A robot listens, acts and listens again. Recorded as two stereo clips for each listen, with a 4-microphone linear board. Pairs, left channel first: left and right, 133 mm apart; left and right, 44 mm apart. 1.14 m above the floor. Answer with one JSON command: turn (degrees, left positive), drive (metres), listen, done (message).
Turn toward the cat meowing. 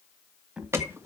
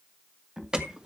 {"turn": -30}
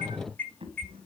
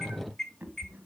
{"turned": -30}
{"turn": -130}
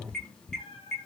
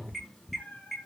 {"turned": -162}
{"turn": 45}
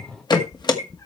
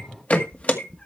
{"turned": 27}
{"turn": 25}
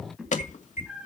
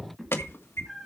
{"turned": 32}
{"done": "Facing the cat meowing, 2 to 4 m away."}